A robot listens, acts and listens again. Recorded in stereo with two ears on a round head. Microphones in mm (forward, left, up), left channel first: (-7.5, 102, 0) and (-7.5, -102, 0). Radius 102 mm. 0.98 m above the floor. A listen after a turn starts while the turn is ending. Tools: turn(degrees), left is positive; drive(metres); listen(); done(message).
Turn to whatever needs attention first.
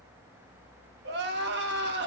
turn(degrees=-50)
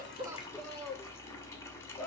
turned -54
done("Facing the crying, 1 to 2 m away.")